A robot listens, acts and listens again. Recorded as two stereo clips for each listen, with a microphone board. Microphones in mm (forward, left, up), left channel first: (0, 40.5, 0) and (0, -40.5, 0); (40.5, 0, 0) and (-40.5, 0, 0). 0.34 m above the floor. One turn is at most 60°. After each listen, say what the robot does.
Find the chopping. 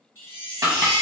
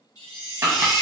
Turn 60° right.
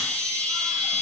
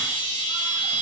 Turn 60° right.
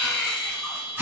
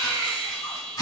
Turn 30° right.
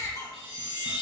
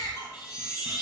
Keep listening.
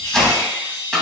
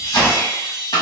Found it: chopping, straight ahead.